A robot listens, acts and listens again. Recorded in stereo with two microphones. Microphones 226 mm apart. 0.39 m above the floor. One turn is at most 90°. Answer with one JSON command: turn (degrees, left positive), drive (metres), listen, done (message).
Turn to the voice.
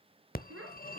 {"turn": -70}
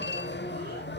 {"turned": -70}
{"listen": true}
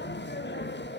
{"listen": true}
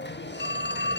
{"done": "I heard a child speaking, but can't make it out now. It was about straight ahead or 40° right."}